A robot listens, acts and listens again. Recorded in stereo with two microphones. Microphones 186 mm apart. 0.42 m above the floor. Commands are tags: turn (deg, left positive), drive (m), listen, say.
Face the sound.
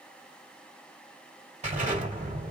<turn deg="-40"/>
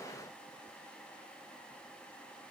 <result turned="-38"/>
<listen/>
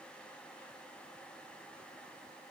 <say>I heard an explosion, but can't make it out now. It was about 5° right or 100° right.</say>